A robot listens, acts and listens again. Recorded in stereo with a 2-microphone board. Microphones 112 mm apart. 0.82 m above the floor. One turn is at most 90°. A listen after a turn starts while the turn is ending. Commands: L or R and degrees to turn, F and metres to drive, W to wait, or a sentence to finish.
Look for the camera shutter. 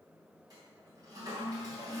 W
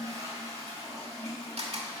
R90
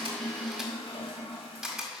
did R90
Found it: a camera shutter, straight ahead.